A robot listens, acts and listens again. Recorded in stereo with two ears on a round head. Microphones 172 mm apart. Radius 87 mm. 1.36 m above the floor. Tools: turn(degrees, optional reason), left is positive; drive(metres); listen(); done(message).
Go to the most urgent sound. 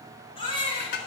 turn(degrees=25, reason="The baby crying: about 25° left or 155° left.")
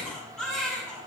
drive(metres=1.0)
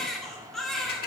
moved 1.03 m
drive(metres=1.0)
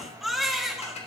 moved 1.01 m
drive(metres=1.0)
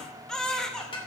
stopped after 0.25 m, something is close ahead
done("Arrived at the baby crying, straight ahead.")